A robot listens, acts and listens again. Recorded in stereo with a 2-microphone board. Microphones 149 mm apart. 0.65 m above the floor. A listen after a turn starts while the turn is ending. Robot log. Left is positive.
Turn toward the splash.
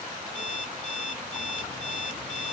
cmd idle
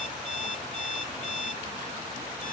cmd idle
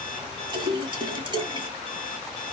note: The splash: about 30° right or 150° right.
cmd yaw -30
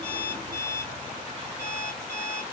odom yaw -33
cmd idle
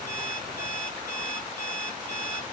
end: I heard a splash, but can't make it out now. It was about straight ahead or 115° right.